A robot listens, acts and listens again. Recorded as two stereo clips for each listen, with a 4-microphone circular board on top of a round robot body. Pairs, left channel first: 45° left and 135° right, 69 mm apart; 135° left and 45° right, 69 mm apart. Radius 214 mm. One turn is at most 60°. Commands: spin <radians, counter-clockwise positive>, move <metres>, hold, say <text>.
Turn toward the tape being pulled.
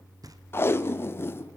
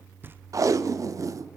spin -0.17
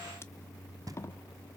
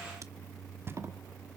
say Found it: tape being pulled, straight ahead.